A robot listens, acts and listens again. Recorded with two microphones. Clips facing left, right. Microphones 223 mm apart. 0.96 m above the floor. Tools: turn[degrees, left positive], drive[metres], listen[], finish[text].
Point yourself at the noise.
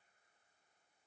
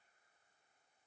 Action: listen[]
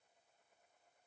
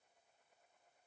Action: listen[]
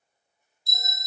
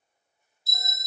Action: turn[-30]
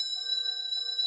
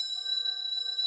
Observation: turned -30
Thought: So it is at 25° left.
Action: turn[25]
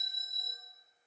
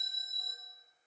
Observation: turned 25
Action: finish[Facing the bell, under 1 m away.]